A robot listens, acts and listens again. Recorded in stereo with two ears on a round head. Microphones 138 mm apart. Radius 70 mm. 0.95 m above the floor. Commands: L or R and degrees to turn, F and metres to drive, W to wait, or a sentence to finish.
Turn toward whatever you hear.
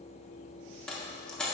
L30
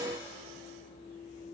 W
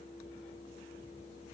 I heard a dropped coin, but can't make it out now. It was about 25° right or 145° left.